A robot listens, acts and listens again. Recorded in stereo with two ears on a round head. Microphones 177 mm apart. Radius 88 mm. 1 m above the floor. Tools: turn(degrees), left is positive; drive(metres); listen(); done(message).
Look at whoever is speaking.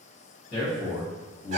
turn(degrees=55)
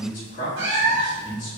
turn(degrees=55)
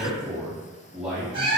done("Facing the man speaking, 1 to 2 m away.")